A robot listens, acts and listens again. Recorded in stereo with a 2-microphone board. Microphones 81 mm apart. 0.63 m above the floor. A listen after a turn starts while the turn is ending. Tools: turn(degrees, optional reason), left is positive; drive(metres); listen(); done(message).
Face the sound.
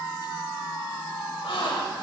turn(degrees=90)
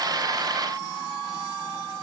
done("I heard a gasp from this way, but can't make it out now.")